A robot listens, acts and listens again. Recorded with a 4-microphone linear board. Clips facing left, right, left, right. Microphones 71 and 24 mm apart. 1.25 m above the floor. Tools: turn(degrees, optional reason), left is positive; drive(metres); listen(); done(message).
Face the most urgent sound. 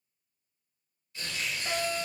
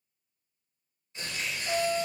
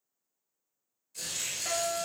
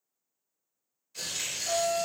turn(degrees=60, reason="The fire alarm: about 60° left or 120° left.")
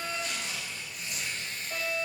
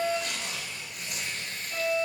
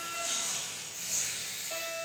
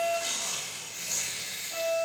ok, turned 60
turn(degrees=45, reason="So it is at 45° left.")
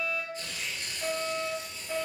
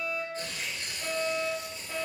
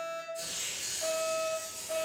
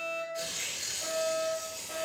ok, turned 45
done("Facing the fire alarm.")